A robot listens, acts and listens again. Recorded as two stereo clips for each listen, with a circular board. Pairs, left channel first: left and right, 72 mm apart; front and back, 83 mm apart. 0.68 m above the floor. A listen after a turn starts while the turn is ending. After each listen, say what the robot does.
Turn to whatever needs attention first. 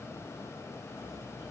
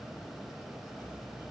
Keep listening.
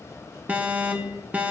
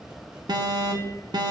Turn 155° right.
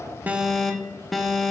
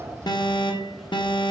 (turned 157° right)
Facing the alarm, 1 to 2 m away.